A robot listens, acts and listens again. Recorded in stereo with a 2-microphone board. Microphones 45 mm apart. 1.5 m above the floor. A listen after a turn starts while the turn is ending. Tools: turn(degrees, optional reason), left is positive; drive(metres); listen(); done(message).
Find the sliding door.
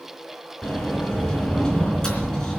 turn(degrees=15, reason="The sliding door: about 15° left or 165° left.")
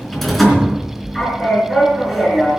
done("Found it: a sliding door, straight ahead.")